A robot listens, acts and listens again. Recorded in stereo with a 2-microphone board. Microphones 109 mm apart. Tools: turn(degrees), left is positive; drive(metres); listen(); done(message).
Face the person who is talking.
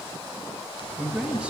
turn(degrees=-30)
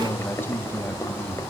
turn(degrees=20)
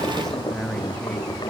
listen()
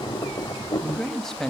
done("Facing the man speaking, 2 to 4 m away.")